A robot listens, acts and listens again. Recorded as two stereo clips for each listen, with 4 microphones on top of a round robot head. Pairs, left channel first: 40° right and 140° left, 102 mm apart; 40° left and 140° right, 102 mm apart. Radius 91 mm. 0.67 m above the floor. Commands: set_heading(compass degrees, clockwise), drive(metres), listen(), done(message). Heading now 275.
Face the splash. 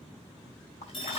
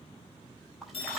set_heading(330)
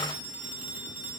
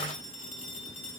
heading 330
done("I heard a splash from this way, but can't make it out now.")